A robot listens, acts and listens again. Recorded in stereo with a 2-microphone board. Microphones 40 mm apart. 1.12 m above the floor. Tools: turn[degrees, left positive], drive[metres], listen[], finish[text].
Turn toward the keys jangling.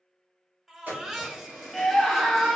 Thought: The keys jangling: about 45° right or 135° right.
Action: turn[-45]
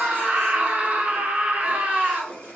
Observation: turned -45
Thought: So it is at 90° right.
Action: turn[-90]
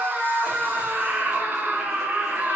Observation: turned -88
Action: listen[]
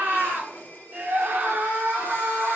Action: listen[]
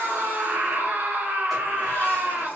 Action: finish[Facing where the keys jangling came from. I can't hear it now.]